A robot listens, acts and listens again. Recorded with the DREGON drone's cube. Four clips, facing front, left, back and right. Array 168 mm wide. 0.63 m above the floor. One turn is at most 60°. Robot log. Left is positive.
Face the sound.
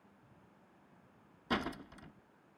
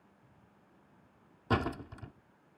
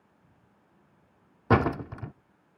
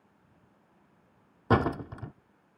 note: The door slam: 150° right.
cmd yaw -60
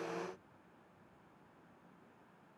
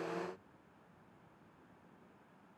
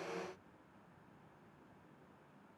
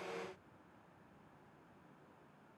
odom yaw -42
note: Nothing new. It was at 110° right.
cmd yaw -60
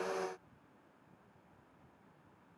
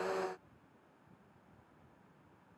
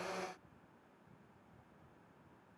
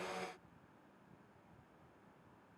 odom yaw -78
note: Nothing new. It was at 30° right.
cmd yaw -30
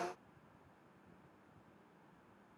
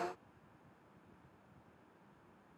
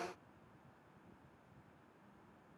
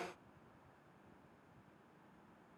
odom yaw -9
note: Nothing new. It was at 20° right.
cmd yaw -20
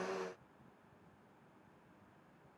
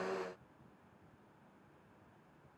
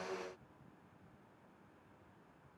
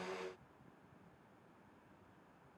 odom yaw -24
end: Facing where the door slam came from. I can't hear it now.